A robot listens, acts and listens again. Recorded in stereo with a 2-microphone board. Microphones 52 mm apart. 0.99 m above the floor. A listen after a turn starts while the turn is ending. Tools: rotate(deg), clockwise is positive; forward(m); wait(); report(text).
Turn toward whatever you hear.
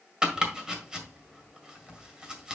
rotate(30)
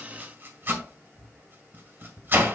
rotate(135)
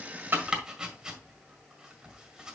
rotate(15)
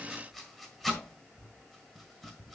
report("Found it: chopping, straight ahead.")